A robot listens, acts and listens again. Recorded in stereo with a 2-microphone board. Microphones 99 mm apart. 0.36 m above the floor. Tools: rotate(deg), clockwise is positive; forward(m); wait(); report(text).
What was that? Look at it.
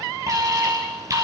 rotate(35)
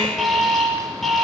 report("Facing the alarm, over 4 m away.")